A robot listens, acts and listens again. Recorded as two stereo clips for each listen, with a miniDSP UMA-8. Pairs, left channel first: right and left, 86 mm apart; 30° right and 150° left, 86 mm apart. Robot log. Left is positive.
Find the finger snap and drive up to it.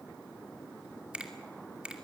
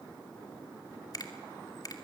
note: The finger snap: 15° left.
cmd yaw +15
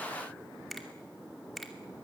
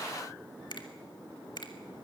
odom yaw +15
cmd fwd 1.0
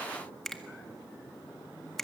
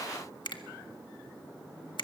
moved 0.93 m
cmd fwd 1.0
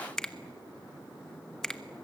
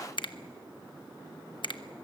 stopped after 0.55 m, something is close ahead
end: Arrived at the finger snap, straight ahead.